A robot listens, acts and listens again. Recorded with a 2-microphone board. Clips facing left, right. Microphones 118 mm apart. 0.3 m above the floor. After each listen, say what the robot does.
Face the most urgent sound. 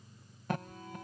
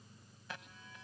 Turn 55° left.
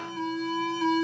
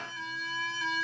Turn 55° left.
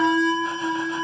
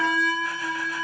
Turn 30° left.
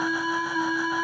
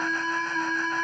Turn 10° left.
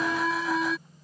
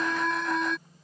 Facing the alarm.